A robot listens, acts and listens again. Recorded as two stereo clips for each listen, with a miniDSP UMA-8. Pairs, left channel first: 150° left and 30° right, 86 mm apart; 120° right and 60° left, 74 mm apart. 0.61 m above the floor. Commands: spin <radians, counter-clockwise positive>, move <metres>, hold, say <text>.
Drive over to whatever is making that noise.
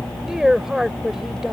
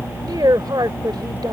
spin 0.96
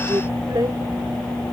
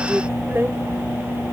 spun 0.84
hold
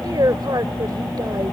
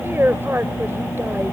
move 1.0
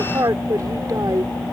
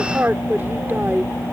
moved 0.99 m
move 1.0
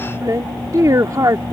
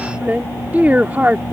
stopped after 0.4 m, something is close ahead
say Arrived at the woman speaking, straight ahead.